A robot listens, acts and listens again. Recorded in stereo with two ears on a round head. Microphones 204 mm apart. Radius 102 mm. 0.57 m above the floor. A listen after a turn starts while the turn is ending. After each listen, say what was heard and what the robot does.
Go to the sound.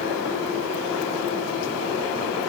Keep listening.
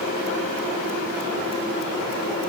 Keep listening.
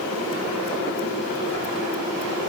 I can't make out anything.